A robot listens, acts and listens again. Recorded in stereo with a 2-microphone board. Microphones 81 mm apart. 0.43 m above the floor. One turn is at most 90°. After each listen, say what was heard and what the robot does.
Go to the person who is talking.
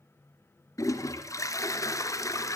Keep listening.
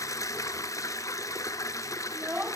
Turn 30° right.
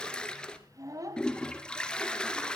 So it is at 135° right. Turn 90° right.
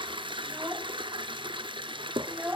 The child speaking is now 25° right. Turn 25° right.
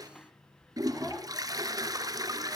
Keep listening.
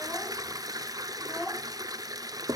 Drive 1.0 m forward.
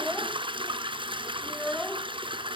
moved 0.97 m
The child speaking is now 10° left. Turn 10° left.
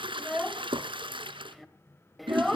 Drive 1.0 m forward.
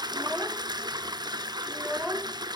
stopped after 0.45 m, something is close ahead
I am next to the child speaking.